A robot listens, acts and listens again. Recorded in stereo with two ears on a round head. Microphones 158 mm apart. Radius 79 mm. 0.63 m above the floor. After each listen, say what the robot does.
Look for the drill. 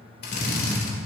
Turn 60° left.
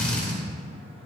Facing the drill, 2 to 4 m away.